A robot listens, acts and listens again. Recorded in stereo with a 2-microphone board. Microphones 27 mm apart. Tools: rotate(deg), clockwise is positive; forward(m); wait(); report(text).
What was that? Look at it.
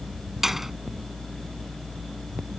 rotate(30)
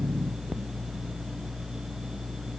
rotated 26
wait()
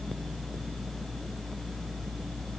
report("I heard a door slam, but can't make it out now. It was about 15° left or 145° right.")